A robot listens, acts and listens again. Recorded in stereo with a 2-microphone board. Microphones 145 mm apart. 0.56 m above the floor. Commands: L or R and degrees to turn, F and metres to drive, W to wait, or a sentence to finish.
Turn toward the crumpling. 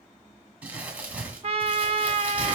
R30
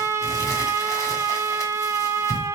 W
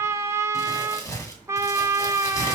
L25
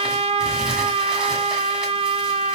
W
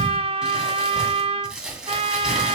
Found it: crumpling, straight ahead.